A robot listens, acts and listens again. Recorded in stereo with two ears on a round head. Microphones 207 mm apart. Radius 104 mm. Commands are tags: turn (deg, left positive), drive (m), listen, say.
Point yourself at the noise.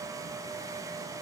<listen/>
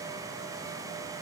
<listen/>
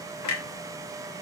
<turn deg="75"/>
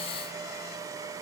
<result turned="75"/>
<listen/>
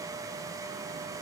<say>I heard a clunk, but can't make it out now. It was about straight ahead or 30° left.</say>